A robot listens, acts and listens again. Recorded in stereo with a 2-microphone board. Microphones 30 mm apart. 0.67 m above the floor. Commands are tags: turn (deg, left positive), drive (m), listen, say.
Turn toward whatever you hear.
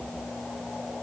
<listen/>
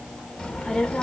<turn deg="30"/>
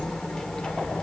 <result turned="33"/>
<turn deg="30"/>
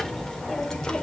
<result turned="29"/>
<turn deg="25"/>
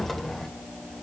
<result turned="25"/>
<turn deg="10"/>
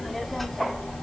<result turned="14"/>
<turn deg="10"/>
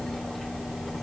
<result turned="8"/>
<say>Facing the child speaking, 2 to 4 m away.</say>